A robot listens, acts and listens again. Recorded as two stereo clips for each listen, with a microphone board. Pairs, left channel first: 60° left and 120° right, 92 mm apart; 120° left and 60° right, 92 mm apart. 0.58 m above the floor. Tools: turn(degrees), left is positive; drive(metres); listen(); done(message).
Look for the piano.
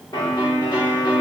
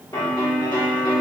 turn(degrees=95)
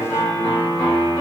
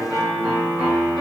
turn(degrees=25)
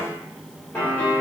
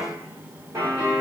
done("Facing the piano, 2 to 4 m away.")